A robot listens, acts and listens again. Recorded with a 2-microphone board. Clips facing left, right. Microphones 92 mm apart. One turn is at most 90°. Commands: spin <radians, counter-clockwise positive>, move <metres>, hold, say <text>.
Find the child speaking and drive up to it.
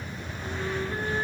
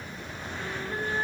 hold
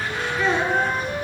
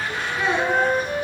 spin -0.26
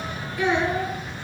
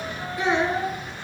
spin -1.57
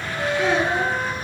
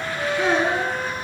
spin -0.61
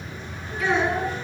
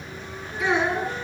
spin -0.17
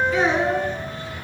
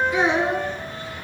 move 1.0
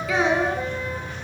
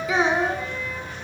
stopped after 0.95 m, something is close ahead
say I am next to the child speaking.